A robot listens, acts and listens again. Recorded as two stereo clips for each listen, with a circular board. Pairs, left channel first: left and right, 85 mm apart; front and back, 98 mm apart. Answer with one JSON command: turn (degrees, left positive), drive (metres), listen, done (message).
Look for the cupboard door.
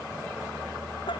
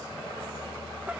{"listen": true}
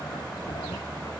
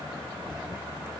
{"listen": true}
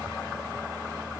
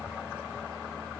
{"done": "I can't make out a cupboard door to turn to."}